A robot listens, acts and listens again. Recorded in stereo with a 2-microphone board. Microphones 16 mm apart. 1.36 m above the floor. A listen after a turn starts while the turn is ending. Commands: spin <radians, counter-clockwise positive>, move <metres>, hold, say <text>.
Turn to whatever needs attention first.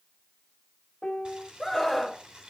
spin -0.52
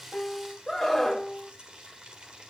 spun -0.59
spin 0.52
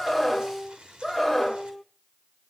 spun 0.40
say Facing the scream, over 4 m away.